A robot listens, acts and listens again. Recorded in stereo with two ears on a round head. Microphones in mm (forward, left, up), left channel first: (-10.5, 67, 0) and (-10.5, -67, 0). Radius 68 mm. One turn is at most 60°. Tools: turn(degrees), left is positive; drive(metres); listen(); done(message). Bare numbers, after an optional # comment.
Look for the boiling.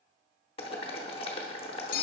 # The boiling: about 35° left or 145° left.
turn(35)
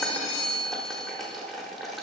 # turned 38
done("Facing the boiling.")